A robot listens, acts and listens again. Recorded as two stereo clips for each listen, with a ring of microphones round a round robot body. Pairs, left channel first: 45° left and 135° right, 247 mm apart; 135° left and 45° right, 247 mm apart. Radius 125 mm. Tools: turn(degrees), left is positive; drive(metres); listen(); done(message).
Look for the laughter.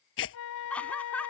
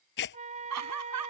turn(degrees=-40)
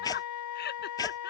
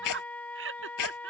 done("Facing the laughter.")